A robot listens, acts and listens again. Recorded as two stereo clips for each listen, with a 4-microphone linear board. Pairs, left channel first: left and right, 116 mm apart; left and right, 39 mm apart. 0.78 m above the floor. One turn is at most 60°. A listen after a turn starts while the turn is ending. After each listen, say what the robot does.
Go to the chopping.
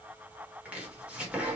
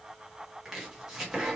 Turn 30° right.
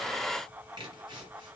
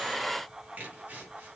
Turn 60° right.
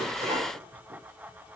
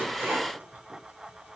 Turn 60° right.
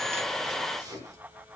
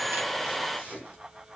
Turn 35° right.
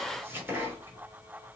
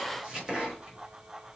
Turn 20° right.
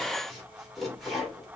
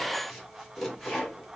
Drive 1.0 m forward.
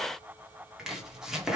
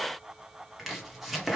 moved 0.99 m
Drive 1.0 m forward.
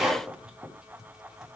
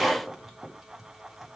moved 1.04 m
Drive 1.0 m forward.
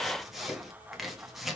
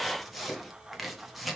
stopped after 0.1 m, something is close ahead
I am next to the chopping.